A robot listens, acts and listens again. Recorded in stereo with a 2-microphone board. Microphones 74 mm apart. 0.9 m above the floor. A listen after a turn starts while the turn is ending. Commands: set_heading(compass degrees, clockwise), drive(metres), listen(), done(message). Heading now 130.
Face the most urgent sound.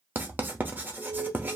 set_heading(100)
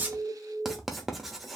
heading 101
set_heading(326)
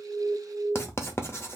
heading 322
done("Facing the alarm, 2 to 4 m away.")